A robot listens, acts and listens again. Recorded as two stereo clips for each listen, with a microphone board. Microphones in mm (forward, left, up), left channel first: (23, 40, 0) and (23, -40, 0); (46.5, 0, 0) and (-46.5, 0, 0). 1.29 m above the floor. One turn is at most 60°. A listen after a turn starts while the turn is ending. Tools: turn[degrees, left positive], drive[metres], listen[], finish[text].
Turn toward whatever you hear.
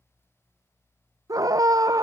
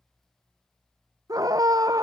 Thought: The scream: 130° right.
Action: turn[-60]
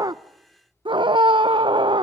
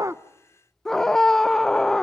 Thought: The scream is now 85° right.
Action: turn[-60]
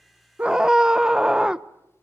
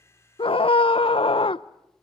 Thought: The scream is now 10° right.
Action: turn[-10]
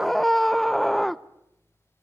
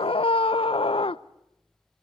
Action: finish[Found it: a scream, straight ahead, under 1 m away.]